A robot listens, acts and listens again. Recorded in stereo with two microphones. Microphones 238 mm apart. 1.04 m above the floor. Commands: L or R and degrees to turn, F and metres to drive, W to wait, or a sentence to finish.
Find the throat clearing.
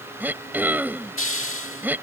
R30
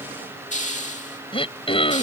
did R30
L20
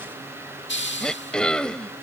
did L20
Facing the throat clearing.